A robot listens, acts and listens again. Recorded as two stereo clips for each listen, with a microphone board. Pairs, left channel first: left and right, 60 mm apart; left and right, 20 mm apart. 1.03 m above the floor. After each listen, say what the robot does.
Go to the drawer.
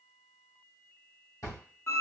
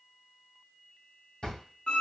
Turn 60° left.
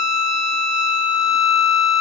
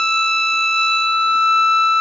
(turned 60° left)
Keep listening.
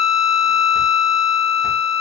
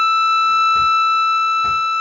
Keep listening.
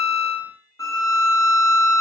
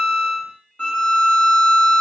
I heard a drawer, but can't make it out now. It was about straight ahead or 60° left. I did not reach it.